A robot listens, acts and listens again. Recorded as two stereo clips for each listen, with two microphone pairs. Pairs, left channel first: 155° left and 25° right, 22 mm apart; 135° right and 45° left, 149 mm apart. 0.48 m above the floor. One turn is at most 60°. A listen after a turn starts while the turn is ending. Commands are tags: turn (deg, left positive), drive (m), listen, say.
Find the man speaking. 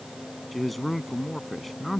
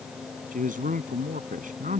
<turn deg="60"/>
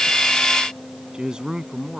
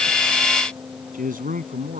<turn deg="25"/>
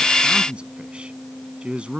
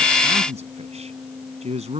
<say>Facing the man speaking.</say>